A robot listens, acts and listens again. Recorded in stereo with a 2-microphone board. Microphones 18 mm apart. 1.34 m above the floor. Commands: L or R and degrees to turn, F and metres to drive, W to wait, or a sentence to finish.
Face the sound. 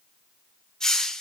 L35
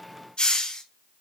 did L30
L110
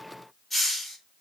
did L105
Found it: a hiss, straight ahead.